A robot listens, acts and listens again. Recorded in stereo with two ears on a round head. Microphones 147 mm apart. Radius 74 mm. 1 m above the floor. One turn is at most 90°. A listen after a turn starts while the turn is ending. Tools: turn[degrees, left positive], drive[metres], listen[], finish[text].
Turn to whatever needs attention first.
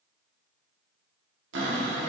Action: listen[]
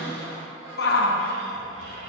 Thought: The shout: about 70° left or 110° left.
Action: turn[70]
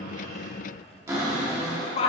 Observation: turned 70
Thought: So it is at 35° left.
Action: turn[35]
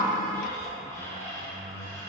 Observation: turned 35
Action: listen[]
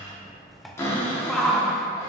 Action: finish[Found it: a shout, straight ahead, under 1 m away.]